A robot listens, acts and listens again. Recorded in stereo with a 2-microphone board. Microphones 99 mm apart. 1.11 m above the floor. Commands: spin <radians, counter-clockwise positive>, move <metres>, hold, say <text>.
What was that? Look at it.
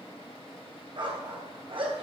spin -1.05
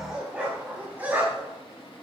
spin -0.35
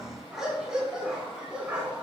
spin -0.17
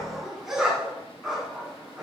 say Facing the dog barking, over 4 m away.